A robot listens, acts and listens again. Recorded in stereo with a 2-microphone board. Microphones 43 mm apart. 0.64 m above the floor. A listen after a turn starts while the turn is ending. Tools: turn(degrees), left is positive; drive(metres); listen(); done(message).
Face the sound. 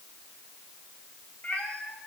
turn(degrees=30)
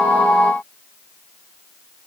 listen()
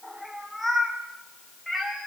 done("Facing the cat meowing, 2 to 4 m away.")